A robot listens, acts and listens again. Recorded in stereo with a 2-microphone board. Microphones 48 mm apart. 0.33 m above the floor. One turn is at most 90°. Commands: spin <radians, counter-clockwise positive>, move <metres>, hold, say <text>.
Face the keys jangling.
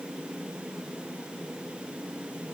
hold
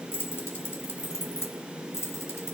spin 1.22
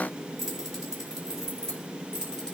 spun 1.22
spin 0.26
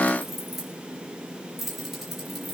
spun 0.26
say Found it: keys jangling, straight ahead.